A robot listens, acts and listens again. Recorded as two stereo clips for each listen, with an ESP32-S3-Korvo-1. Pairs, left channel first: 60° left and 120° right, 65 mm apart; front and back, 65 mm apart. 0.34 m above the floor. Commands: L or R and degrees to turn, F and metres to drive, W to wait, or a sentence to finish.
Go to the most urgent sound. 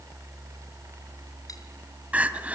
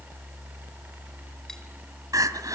L175
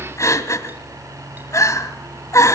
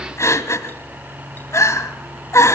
L35
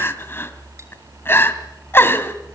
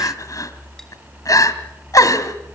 L10
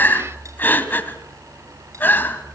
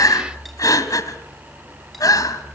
F1.0
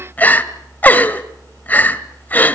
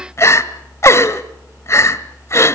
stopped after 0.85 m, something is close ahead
L10
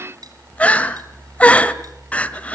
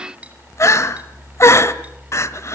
I am next to the crying.